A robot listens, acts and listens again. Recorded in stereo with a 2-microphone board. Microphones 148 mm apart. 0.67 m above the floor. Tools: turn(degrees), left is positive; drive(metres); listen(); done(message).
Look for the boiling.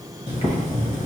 turn(degrees=50)
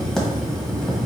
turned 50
done("Found it: boiling, straight ahead.")